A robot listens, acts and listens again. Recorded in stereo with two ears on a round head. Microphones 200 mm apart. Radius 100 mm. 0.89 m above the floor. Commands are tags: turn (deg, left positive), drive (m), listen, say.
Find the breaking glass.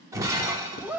<turn deg="-30"/>
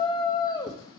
<listen/>
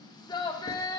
<say>I heard breaking glass, but can't make it out now. It was about 15° left or 135° right.</say>